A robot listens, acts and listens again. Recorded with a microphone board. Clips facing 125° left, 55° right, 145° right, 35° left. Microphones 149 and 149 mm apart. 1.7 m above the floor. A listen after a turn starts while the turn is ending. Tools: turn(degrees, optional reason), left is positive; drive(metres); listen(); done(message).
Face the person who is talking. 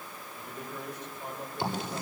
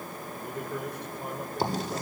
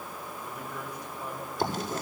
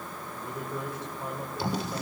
turn(degrees=-30, reason="The man speaking: 30° right.")
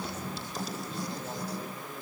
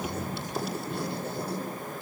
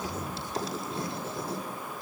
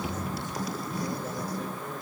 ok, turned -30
listen()
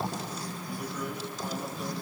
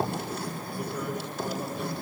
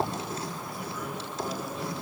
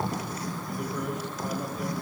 listen()
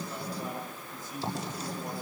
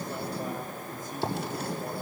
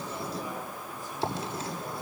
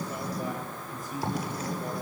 turn(degrees=-15, reason="The man speaking is now 15° right.")
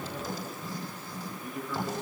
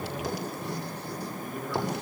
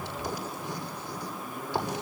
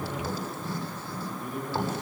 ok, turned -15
done("Found it: a man speaking, straight ahead, over 4 m away.")